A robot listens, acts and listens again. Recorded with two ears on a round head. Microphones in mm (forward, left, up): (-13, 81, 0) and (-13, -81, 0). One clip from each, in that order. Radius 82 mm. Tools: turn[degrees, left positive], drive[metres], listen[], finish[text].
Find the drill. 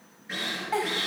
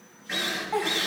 Action: turn[-30]
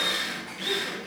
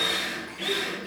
Thought: So it is at 15° left.
Action: turn[15]
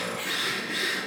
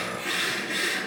Action: finish[Found it: a drill, straight ahead.]